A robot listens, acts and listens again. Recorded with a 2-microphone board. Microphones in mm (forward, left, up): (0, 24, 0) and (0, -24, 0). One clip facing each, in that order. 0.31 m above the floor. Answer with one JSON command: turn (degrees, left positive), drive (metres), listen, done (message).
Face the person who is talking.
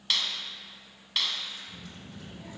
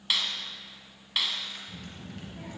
{"turn": -40}
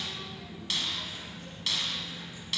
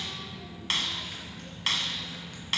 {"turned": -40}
{"done": "Facing the child speaking, over 4 m away."}